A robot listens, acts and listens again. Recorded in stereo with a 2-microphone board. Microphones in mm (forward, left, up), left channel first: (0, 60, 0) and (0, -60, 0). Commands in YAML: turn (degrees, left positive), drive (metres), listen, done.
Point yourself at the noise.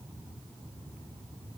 listen: true
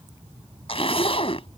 turn: 50
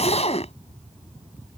turn: 75
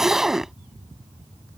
done: "Found it: a zipper, straight ahead."